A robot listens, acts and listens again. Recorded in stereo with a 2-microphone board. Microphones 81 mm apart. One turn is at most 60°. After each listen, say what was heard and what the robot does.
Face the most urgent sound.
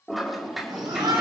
The shout: about 65° right or 115° right. Turn 60° right.
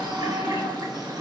Facing the shout.